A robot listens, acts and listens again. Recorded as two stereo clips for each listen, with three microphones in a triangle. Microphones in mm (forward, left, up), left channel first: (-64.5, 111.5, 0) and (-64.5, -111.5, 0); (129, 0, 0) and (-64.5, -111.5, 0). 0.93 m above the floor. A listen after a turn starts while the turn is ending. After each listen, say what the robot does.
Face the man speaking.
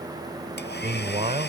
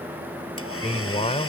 Turn 30° right.
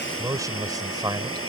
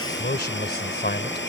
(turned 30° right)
Turn 15° right.
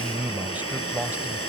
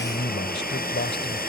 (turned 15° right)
Turn 10° right.
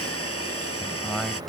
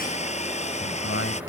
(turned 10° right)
Found it: a man speaking, straight ahead.